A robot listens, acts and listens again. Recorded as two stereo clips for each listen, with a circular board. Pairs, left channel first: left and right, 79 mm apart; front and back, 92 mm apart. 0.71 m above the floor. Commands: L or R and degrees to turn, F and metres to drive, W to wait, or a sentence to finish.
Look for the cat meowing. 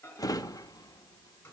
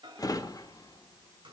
W
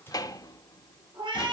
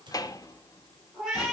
R95
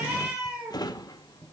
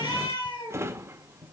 R15
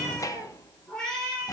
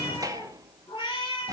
L10
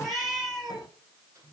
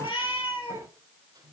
Found it: a cat meowing, straight ahead, over 4 m away.